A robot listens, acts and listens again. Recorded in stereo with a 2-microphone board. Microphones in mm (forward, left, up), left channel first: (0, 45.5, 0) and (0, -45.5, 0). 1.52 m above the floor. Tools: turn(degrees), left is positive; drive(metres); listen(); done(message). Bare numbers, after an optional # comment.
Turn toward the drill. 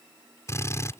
# The drill: about 30° left or 150° left.
turn(30)
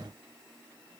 listen()
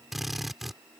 done("Found it: a drill, straight ahead.")